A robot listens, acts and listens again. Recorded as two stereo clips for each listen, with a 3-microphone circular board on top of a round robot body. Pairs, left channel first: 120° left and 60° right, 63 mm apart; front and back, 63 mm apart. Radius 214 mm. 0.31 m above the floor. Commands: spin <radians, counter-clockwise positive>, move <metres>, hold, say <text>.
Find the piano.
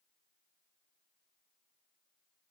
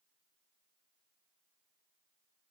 hold
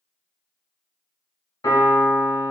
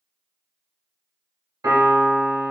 spin 2.79
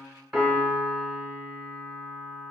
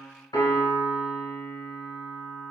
spin 0.52
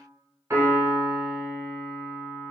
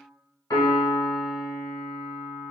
say Found it: a piano, straight ahead.